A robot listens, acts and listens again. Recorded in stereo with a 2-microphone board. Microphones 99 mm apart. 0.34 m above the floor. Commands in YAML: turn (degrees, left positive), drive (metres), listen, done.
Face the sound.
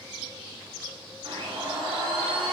turn: -65
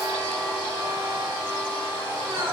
turn: -25
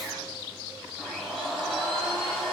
done: "Facing the blender."